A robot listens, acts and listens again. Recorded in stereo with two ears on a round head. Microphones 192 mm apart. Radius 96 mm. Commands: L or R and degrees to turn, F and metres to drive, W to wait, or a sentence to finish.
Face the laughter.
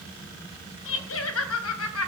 L70
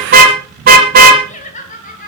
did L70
L35
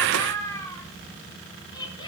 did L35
L20
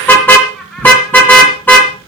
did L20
Found it: laughter, straight ahead.